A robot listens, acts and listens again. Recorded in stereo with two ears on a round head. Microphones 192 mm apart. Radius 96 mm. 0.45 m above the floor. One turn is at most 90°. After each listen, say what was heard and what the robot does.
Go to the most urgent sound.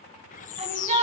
The shout: about 30° right or 150° right. Turn 30° right.
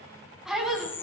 Drive 1.0 m forward.
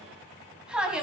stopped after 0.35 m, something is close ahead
Blocked. The shout is further on, straight ahead.